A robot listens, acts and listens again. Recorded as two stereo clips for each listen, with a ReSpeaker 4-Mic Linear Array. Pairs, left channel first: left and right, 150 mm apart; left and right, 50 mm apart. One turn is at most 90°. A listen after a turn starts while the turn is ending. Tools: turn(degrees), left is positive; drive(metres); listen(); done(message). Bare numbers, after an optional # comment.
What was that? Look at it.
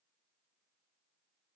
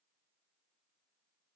listen()
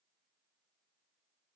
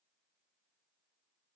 listen()
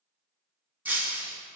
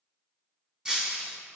turn(-30)
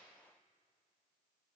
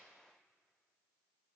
listen()
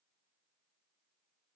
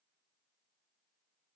done("I heard breaking glass, but can't make it out now. It was about 15° left or 135° right.")